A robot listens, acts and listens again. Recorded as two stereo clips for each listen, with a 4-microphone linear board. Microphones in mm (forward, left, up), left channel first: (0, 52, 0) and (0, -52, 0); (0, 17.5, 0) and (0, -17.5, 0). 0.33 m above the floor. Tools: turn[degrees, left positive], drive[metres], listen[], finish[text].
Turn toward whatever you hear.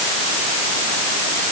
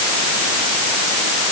Action: listen[]
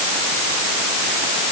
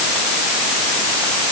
Action: listen[]
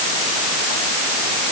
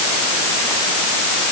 Action: finish[I can't make out anything.]